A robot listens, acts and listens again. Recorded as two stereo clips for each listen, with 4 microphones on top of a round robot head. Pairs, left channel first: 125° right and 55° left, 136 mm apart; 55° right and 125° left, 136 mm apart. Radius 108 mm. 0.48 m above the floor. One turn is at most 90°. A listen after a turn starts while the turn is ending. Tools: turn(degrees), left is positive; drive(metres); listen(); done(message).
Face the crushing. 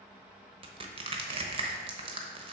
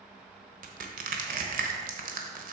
turn(degrees=90)
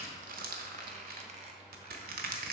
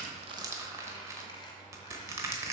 turn(degrees=55)
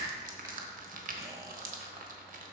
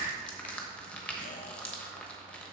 turn(degrees=30)
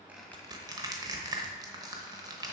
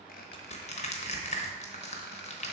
turn(degrees=-10)
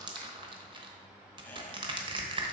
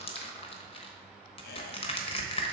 done("Facing the crushing, 1 to 2 m away.")